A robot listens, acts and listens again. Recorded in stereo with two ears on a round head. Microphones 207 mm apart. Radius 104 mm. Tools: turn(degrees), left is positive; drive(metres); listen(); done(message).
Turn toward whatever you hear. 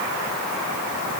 listen()
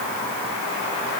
listen()
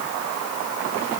done("I can't make out anything to turn to.")